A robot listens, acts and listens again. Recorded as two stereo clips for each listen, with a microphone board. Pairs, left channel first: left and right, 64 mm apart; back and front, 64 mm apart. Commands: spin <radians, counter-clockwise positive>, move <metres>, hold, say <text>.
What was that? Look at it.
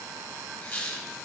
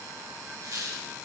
spin 0.44
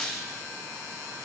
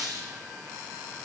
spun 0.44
say Facing the squeak, 1 to 2 m away.